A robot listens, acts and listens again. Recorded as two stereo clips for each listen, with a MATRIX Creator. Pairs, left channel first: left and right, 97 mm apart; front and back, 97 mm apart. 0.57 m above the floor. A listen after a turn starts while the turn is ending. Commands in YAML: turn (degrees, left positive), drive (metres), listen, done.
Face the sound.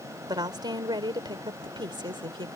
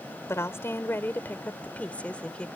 turn: -80
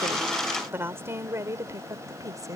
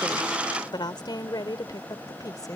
turn: -45
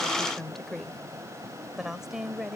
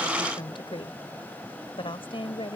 done: "Found it: a woman speaking, straight ahead."